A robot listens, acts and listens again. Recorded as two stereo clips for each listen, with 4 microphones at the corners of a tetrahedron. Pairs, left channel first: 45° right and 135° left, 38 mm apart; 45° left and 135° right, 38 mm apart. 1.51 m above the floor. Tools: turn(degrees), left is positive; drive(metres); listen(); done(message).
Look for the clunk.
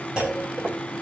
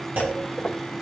turn(degrees=-155)
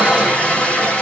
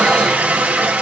done("I heard a clunk from this way, but can't make it out now.")